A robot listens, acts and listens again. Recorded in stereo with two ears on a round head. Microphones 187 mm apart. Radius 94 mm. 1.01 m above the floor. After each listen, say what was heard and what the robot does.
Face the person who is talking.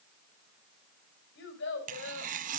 The child speaking: about 55° left or 125° left. Turn 55° left.
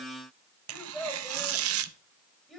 Facing the child speaking, 2 to 4 m away.